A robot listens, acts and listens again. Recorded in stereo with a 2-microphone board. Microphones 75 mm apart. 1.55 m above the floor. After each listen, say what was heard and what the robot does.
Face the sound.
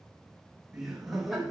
Turn 30° left.
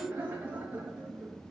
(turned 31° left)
So it is at 15° right. Turn 15° right.
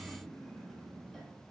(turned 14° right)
Facing the laughter.